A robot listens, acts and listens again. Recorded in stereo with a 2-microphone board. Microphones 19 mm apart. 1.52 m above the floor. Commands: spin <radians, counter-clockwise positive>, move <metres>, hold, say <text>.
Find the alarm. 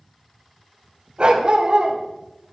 hold
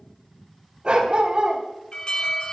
spin 0.96
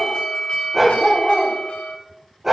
spin 1.22
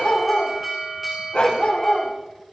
spin -0.17
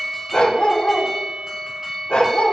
say Found it: an alarm, straight ahead, over 4 m away.